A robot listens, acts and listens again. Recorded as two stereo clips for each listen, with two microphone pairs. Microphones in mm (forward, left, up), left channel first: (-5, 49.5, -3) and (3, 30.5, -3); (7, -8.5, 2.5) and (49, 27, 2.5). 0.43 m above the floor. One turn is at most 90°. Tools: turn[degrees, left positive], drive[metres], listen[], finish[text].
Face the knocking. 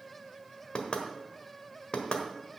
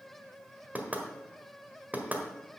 Thought: The knocking: 95° left.
Action: turn[90]
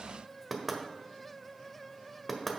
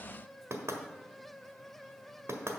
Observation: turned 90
Thought: The knocking is now 30° left.
Action: turn[30]
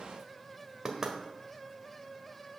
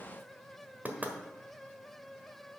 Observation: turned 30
Thought: The knocking is now 10° right.
Action: turn[-10]
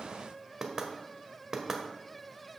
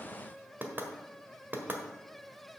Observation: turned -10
Action: finish[Facing the knocking.]